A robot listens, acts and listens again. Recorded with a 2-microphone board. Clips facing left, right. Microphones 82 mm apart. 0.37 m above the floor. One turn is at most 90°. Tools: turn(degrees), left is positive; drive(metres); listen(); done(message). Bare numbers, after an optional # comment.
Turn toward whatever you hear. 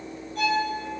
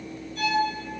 # The violin: about 55° left or 125° left.
turn(55)
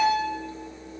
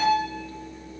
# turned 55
# So it is at 30° left.
turn(30)
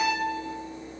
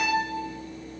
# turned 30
done("Facing the violin.")